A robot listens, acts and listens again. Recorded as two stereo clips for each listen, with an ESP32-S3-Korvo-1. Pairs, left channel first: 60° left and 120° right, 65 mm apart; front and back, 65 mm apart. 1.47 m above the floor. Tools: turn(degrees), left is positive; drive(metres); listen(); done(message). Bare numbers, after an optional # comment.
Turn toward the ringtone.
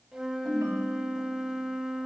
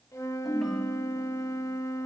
# The ringtone: 85° right.
turn(-85)
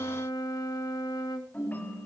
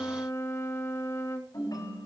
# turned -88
done("Found it: a ringtone, straight ahead, over 4 m away.")